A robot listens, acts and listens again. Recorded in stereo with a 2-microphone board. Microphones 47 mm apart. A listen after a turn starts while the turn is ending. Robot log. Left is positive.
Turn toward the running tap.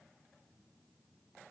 cmd idle
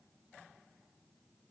cmd idle
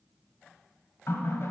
note: The running tap: about 60° left or 120° left.
cmd yaw +60
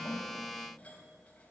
note: So it is at 30° left.
cmd yaw +30
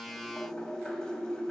note: The running tap is now 15° left.
cmd yaw +15
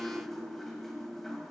end: Found it: a running tap, straight ahead, 1 to 2 m away.